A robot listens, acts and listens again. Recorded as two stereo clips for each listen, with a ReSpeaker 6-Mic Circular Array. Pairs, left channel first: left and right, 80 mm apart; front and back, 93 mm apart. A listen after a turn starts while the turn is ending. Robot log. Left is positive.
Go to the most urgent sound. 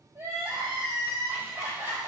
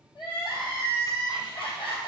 note: The crying: 35° right.
cmd yaw -35
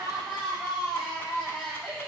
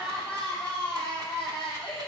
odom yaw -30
cmd fwd 1.0
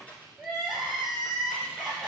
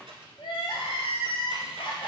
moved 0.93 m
cmd fwd 1.0
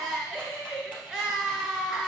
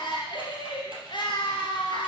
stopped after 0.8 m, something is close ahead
end: I am next to the crying.